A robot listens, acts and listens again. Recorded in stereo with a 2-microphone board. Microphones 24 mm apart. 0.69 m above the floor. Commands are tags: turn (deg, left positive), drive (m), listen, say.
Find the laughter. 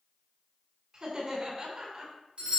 <turn deg="-35"/>
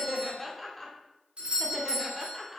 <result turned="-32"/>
<say>Found it: laughter, straight ahead, 1 to 2 m away.</say>